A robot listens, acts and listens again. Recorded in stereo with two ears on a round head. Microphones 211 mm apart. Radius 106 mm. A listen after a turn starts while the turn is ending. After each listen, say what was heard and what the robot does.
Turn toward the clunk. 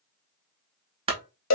The clunk: about 25° right or 155° right. Turn 25° right.
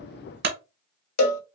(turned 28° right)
So it is at 125° right. Turn 125° right.
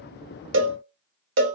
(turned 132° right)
I heard a clunk from this way, but can't make it out now.